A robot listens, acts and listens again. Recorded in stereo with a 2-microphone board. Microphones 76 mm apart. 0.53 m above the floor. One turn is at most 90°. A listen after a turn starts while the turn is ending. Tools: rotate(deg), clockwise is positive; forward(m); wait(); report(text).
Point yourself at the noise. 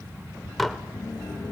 rotate(-30)
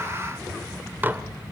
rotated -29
rotate(25)
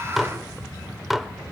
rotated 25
report("Found it: dishes clattering, straight ahead.")